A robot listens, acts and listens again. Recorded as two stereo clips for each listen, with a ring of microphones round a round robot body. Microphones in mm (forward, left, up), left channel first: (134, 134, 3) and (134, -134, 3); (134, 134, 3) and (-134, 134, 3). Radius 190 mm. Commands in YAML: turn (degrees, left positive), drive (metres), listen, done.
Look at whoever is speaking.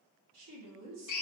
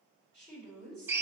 turn: -100
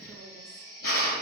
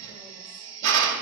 listen: true
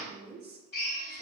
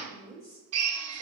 turn: -40
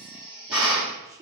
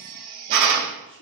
turn: -10
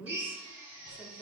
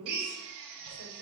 done: "Found it: a woman speaking, straight ahead."